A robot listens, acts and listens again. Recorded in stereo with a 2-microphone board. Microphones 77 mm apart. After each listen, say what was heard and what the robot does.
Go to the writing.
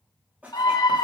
The writing: about 15° right or 165° right. Turn 15° right.
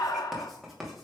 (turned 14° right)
Drive 1.0 m forward.
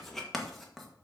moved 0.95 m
Drive 1.0 m forward.
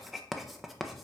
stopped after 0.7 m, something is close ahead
I am next to the writing.